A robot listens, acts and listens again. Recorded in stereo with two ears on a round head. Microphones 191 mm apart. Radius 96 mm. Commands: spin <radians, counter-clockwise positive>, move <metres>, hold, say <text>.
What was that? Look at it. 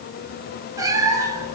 spin -0.26
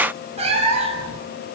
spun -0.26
spin -0.52
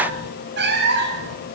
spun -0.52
spin -2.18
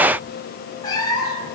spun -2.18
spin 0.35
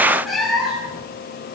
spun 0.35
say Found it: a cat meowing, straight ahead, over 4 m away.